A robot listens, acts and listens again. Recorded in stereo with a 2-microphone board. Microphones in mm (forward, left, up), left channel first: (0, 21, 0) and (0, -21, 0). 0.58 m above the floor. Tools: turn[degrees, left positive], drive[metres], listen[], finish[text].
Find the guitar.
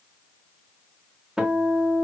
Thought: The guitar: about 25° right or 155° right.
Action: turn[-25]
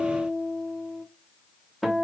Action: finish[Found it: a guitar, straight ahead, under 1 m away.]